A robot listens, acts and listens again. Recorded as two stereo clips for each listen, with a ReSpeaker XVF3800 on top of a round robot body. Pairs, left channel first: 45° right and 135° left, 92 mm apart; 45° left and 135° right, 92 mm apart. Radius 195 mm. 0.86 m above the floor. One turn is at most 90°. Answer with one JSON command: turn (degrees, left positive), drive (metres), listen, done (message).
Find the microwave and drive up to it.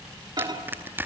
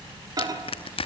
{"turn": 90}
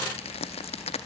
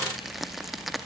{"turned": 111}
{"turn": 65}
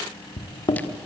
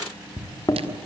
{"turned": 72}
{"drive": 1.0}
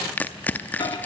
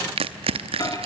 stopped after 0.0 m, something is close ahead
{"done": "Something is in my way. I am facing the microwave but have not reached it."}